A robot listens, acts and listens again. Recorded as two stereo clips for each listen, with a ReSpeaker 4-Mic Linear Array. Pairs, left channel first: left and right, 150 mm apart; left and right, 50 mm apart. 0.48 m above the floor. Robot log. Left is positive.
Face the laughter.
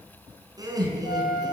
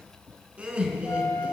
note: The laughter: about 25° right or 155° right.
cmd yaw -25
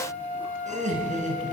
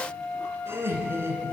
note: So it is at 125° right.
cmd yaw -125
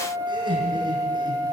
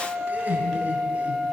note: The laughter is now 30° right.
cmd yaw -30
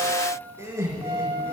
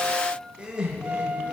note: The laughter is now 15° right.
cmd yaw -15
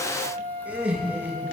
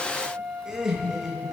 note: The laughter is now 10° right.
cmd yaw -10
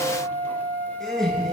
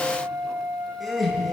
end: Found it: laughter, straight ahead, over 4 m away.